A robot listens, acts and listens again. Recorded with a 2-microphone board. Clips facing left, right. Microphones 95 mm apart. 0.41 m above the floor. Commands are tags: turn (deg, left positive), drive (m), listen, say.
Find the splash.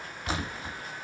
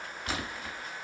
<turn deg="30"/>
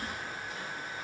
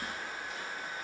<listen/>
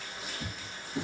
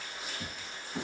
<say>I heard a splash, but can't make it out now. It was about straight ahead or 120° left.</say>